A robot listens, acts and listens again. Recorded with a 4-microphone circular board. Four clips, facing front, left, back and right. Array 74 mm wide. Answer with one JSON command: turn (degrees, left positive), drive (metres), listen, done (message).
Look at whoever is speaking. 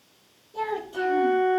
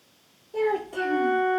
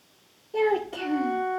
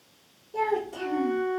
{"turn": 160}
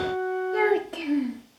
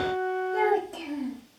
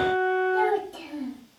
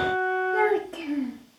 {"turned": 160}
{"turn": -30}
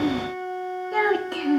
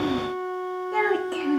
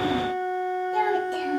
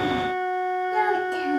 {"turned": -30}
{"turn": 25}
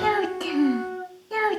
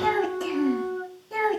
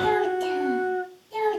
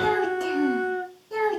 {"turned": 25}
{"done": "Found it: a child speaking, straight ahead."}